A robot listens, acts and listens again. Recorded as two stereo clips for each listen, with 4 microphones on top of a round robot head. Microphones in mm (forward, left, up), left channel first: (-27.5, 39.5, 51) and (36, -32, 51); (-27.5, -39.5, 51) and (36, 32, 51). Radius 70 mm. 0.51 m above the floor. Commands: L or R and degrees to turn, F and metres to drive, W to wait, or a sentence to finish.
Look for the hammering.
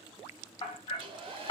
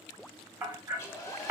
L110
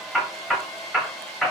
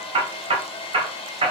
L45
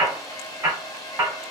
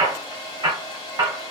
Found it: hammering, straight ahead.